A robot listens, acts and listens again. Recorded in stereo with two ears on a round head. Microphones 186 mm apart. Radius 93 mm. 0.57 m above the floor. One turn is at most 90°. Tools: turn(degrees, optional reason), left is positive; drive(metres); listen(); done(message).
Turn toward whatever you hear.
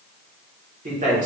turn(degrees=-35, reason="The man speaking: about 35° right or 145° right.")
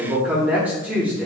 turn(degrees=-10, reason="So it is at 10° right.")
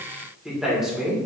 done("Facing the man speaking, 1 to 2 m away.")